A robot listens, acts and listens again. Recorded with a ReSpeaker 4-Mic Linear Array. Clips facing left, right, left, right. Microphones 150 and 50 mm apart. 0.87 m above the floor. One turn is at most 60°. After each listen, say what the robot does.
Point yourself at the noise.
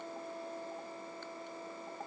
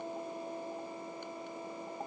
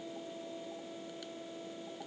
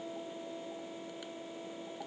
Keep listening.
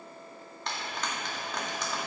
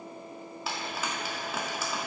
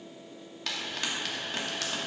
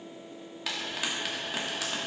Turn 30° right.
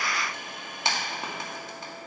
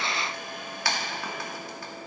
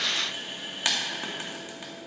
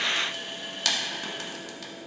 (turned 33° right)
Turn 25° left.
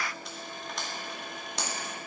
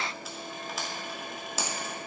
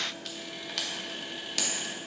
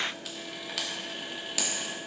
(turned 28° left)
Facing the frying.